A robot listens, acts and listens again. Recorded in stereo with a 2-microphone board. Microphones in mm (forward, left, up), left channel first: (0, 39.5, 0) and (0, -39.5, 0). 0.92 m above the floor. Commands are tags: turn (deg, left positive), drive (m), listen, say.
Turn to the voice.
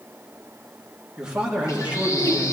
<turn deg="-20"/>
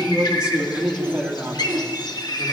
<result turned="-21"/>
<turn deg="-20"/>
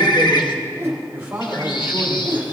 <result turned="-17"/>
<turn deg="-20"/>
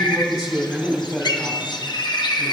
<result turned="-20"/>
<say>Facing the man speaking.</say>